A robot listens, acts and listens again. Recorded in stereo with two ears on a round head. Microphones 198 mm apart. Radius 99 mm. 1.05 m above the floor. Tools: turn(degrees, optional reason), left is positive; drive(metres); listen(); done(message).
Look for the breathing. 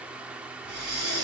turn(degrees=-45, reason="The breathing: about 45° right or 135° right.")
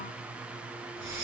turn(degrees=-80, reason="So it is at 80° right.")
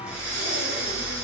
done("Found it: breathing, straight ahead.")